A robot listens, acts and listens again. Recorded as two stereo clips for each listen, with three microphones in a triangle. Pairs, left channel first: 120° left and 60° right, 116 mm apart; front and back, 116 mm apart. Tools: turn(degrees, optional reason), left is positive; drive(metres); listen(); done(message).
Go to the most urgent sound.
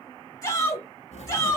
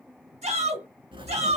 turn(degrees=175, reason="The shout: 175° left.")
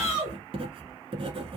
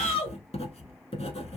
turn(degrees=15, reason="The shout is now 15° left.")
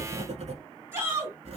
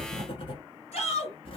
drive(metres=1.0)
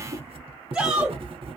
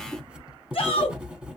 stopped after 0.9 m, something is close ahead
turn(degrees=15, reason="The shout is now 15° left.")
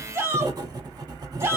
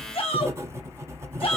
done("Arrived at the shout, straight ahead.")